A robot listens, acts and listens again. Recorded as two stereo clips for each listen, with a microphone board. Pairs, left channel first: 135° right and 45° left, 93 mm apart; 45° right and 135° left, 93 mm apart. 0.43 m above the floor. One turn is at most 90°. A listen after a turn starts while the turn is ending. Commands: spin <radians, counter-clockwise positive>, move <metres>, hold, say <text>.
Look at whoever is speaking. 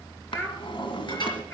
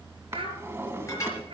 spin 1.57
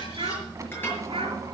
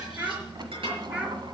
spin 1.05
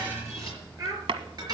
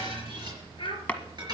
spin -0.17
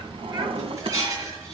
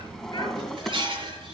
hold
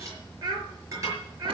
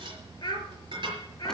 say Facing the child speaking, over 4 m away.